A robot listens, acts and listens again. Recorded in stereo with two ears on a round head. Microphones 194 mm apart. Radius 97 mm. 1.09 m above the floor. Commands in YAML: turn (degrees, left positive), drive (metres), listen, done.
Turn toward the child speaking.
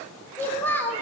turn: 30
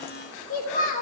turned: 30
turn: 140
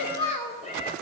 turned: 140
turn: 30
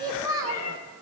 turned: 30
turn: -15
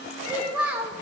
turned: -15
done: "Found it: a child speaking, straight ahead, 2 to 4 m away."